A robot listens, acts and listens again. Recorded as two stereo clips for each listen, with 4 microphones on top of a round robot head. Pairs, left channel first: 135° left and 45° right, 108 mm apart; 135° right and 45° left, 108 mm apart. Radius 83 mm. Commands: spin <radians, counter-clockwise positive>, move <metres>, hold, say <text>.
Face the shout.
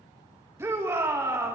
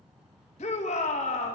spin -2.01
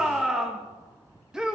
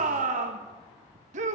spin 0.70
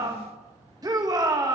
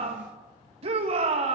spin 0.17
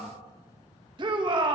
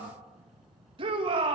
say Facing the shout, 2 to 4 m away.